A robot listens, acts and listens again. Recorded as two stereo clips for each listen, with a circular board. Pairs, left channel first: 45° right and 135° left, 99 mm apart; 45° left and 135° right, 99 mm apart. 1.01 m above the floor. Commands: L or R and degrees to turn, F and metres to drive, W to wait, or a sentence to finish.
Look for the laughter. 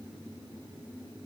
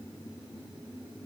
W
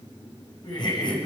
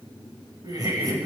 R85
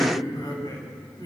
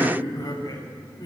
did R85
Found it: laughter, straight ahead, over 4 m away.